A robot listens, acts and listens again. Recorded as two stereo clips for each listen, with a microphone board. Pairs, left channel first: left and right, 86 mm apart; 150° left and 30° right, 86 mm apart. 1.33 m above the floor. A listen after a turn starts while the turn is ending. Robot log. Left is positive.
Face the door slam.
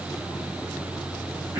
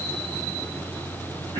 cmd idle
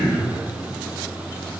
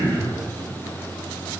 cmd idle
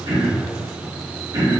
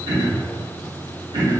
end: I can't make out a door slam, only throat clearing.